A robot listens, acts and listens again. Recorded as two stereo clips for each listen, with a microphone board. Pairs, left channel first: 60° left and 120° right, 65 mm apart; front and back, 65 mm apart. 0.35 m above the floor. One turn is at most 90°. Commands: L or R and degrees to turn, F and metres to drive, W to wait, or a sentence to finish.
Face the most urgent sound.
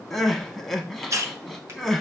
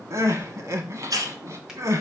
L90
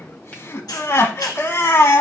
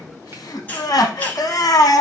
L15
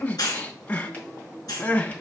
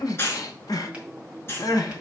Facing the crying.